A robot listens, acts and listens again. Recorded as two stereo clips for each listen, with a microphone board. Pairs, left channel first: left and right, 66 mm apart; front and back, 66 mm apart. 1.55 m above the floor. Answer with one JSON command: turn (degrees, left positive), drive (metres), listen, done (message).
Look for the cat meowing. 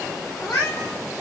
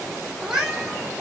{"turn": 100}
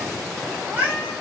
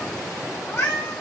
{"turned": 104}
{"turn": -35}
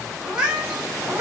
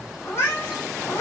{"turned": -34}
{"turn": -35}
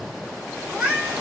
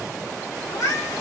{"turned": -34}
{"turn": -20}
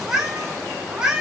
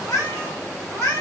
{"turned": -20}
{"turn": -15}
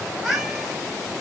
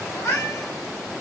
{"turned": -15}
{"done": "Found it: a cat meowing, straight ahead."}